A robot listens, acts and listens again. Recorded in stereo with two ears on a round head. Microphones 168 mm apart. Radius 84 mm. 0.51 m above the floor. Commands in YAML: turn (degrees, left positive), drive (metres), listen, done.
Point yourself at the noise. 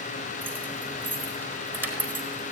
turn: -30
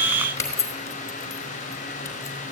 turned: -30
turn: 15
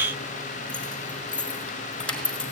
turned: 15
done: "Facing the keys jangling, over 4 m away."